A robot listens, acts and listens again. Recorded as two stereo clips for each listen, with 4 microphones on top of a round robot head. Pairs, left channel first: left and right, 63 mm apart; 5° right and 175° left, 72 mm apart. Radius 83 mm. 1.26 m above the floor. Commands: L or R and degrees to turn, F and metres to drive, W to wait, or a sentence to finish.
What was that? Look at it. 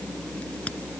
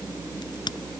L15
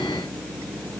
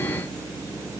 Facing where the crack came from. I can't hear it now.